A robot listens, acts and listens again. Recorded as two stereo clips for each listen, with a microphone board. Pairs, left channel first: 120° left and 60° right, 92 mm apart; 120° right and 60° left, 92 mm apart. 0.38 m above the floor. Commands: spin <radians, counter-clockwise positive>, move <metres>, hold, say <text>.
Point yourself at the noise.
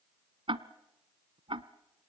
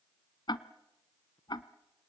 spin -1.40
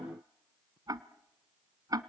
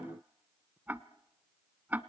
spin -0.17
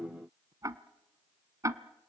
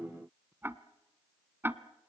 say Facing the ticking.